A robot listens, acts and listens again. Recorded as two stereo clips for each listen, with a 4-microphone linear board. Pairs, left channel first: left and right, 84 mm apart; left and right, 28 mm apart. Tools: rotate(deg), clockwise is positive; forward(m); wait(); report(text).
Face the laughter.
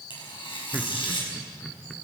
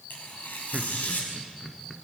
rotate(-30)
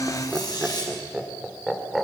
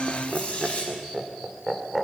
rotate(-30)
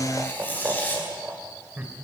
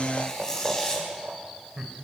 rotate(20)
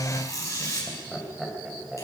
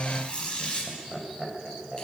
report("Facing the laughter.")